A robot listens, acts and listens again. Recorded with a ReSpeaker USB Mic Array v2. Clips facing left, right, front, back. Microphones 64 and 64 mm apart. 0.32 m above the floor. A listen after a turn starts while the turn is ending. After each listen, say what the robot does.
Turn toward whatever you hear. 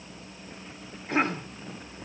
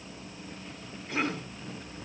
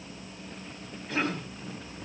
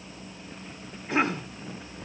Turn 115° left.
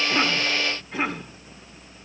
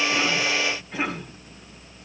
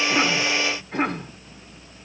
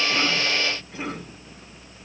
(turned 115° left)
Found it: a cough, straight ahead, 2 to 4 m away.